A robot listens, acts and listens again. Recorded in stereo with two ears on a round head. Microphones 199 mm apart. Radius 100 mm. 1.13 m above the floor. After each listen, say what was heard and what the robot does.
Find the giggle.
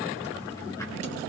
Keep listening.
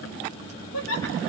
The giggle: about 75° left or 105° left. Turn 75° left.
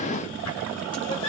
So it is at 30° left. Turn 30° left.
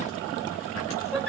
Facing the giggle.